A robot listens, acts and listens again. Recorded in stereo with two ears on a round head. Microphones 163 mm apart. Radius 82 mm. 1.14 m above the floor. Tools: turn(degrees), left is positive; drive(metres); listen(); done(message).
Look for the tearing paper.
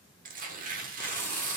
turn(degrees=-50)
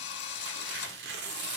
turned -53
turn(degrees=-75)
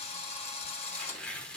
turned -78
done("Facing the tearing paper.")